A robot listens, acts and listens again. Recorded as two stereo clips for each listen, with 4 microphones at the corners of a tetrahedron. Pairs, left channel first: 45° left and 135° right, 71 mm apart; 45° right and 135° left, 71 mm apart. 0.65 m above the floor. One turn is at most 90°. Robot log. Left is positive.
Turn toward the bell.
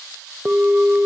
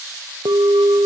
note: The bell: 155° left.
cmd yaw +90
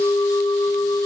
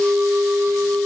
note: The bell is now 70° left.
cmd yaw +70
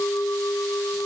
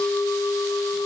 end: Found it: a bell, straight ahead.